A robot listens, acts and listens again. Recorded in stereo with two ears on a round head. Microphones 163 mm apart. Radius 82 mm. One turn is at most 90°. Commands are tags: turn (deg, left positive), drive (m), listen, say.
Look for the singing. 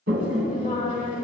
<turn deg="30"/>
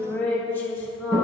<turn deg="15"/>
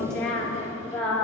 <turn deg="10"/>
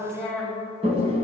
<say>Found it: singing, straight ahead.</say>